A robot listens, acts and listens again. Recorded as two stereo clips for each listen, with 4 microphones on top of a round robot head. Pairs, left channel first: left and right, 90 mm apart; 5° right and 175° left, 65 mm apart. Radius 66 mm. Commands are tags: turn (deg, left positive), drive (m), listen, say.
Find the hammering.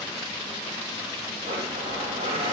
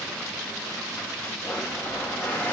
<listen/>
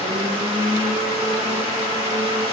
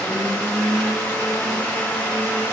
<listen/>
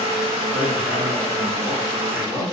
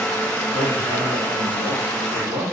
<turn deg="-155"/>
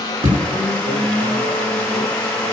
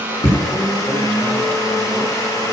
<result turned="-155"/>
<turn deg="-50"/>
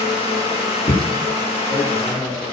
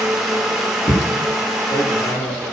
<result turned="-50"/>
<turn deg="15"/>
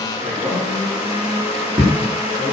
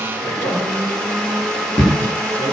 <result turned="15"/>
<say>Found it: hammering, straight ahead.</say>